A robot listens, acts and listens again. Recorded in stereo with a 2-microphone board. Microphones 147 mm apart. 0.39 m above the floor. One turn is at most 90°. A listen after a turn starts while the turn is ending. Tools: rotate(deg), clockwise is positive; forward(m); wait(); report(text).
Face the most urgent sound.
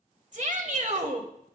rotate(55)
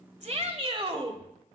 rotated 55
rotate(50)
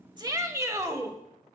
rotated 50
rotate(25)
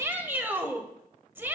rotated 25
rotate(15)
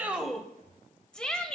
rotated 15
report("Facing the shout.")